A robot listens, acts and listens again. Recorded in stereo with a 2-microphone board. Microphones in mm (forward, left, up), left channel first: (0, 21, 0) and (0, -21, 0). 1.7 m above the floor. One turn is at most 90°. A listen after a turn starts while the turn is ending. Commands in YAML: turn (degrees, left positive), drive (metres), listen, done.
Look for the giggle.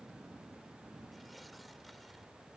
listen: true
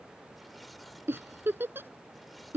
turn: -60
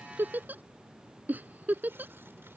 turn: -50
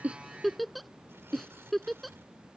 done: "Found it: a giggle, straight ahead."